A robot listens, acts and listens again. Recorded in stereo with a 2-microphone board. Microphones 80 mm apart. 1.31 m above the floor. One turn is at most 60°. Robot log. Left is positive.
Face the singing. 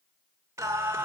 note: The singing: about 30° right or 150° right.
cmd yaw -30
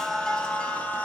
note: So it is at 20° left.
cmd yaw +20
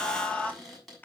note: The singing is now 20° left.
cmd yaw +20
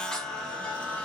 note: The singing is now 15° left.
cmd yaw +15
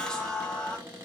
note: The singing is now 10° left.
cmd yaw +10
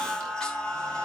note: The singing is now 10° left.
cmd yaw +10
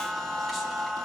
end: Facing the singing.